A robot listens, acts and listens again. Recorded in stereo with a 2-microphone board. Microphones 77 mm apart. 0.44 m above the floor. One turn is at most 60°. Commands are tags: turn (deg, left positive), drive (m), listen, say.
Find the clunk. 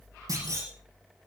<turn deg="-55"/>
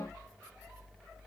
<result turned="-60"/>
<listen/>
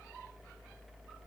<say>I heard a clunk, but can't make it out now. It was about 5° left or 65° right.</say>